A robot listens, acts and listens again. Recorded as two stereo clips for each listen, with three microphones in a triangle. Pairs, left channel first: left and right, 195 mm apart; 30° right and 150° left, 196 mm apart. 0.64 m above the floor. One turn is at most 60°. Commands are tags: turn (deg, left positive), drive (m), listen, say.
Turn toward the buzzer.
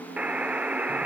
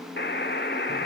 <say>Facing the buzzer.</say>